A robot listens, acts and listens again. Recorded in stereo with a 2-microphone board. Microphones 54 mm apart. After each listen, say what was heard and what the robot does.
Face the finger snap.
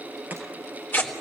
Keep listening.
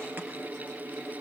Keep listening.
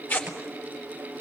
I can't make out a finger snap to turn to.